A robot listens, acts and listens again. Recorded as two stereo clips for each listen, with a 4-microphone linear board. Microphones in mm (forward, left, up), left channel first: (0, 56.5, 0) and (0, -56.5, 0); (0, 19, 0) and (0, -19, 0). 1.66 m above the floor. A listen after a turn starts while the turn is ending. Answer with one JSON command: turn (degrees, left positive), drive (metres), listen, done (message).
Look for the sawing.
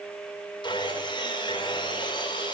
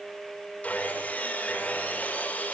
{"turn": 40}
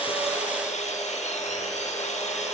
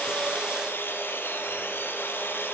{"turn": 100}
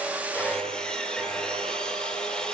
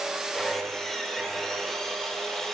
{"done": "Found it: sawing, straight ahead, over 4 m away."}